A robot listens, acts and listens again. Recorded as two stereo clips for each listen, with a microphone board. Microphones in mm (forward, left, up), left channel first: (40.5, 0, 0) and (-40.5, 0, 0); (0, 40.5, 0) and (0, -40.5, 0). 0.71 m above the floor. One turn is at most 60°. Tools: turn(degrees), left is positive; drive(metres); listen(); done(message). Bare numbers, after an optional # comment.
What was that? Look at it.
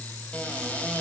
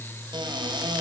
# The cupboard door: 70° right.
turn(-60)
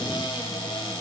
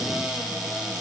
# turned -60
done("Found it: a cupboard door, straight ahead, 1 to 2 m away.")